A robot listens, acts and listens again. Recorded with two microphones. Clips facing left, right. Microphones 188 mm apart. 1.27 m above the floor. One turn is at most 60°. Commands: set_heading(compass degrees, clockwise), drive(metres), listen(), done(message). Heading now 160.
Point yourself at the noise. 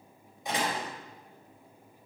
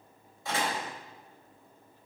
set_heading(145)
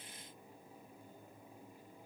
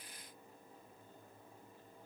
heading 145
listen()
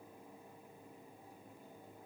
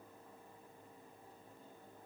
done("I heard a door slam, but can't make it out now. It was about straight ahead or 150° left.")